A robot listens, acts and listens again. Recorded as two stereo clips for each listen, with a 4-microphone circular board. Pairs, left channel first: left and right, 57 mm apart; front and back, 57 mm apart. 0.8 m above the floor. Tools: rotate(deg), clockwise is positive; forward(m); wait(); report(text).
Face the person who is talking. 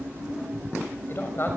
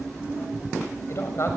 rotate(-40)
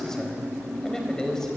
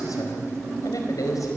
rotate(-10)
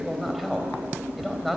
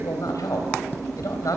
report("Facing the man speaking.")